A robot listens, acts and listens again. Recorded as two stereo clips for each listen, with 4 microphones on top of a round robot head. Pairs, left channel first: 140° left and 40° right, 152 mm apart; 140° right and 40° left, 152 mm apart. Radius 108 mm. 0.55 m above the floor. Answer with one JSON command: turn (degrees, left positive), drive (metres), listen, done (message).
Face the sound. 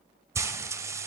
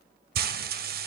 {"turn": 30}
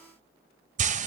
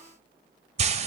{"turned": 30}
{"done": "Found it: frying, straight ahead."}